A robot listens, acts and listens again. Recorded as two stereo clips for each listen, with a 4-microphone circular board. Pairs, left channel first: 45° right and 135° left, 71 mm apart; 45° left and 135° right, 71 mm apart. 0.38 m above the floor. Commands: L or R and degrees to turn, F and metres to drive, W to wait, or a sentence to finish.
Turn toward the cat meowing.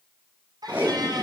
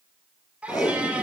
L150
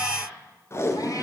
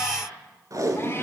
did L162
R15
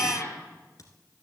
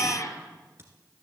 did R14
Facing the cat meowing, 2 to 4 m away.